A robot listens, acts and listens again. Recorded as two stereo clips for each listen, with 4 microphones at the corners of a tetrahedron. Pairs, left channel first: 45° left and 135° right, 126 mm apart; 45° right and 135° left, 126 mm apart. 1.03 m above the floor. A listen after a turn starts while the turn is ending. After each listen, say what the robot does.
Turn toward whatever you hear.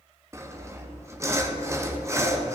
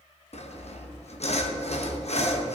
Turn 70° right.
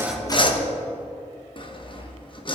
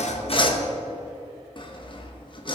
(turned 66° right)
Found it: sawing, straight ahead, 1 to 2 m away.